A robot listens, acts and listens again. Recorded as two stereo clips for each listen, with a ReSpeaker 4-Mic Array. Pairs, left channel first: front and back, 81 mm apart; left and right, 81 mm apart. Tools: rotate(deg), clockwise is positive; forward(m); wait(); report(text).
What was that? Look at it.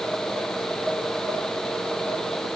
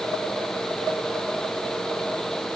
wait()
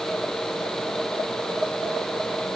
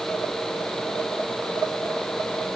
wait()
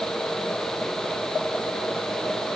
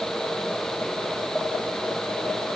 report("I can't make out anything.")